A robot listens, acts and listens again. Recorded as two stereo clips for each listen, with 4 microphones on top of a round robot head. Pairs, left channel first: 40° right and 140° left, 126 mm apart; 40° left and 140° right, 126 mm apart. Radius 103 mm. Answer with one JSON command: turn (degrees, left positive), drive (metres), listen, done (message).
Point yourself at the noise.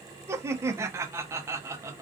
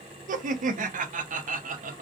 {"turn": -150}
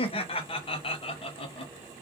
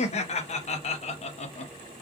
{"done": "Facing the laughter, under 1 m away."}